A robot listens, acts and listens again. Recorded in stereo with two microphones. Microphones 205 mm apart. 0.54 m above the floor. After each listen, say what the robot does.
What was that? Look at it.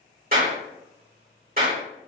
Turn 45° right.
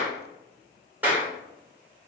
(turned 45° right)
Turn 10° right.
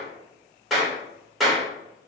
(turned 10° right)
Found it: a clap, straight ahead.